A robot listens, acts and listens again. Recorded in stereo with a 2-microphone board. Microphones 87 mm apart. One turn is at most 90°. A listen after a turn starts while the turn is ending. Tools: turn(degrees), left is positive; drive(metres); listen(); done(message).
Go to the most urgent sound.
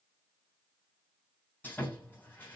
listen()
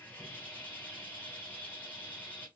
listen()
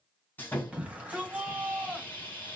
turn(degrees=-15)
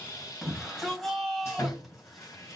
drive(metres=1.0)
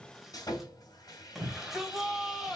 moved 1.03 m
drive(metres=1.0)
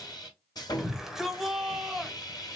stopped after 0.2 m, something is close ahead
done("Arrived at the shout, straight ahead.")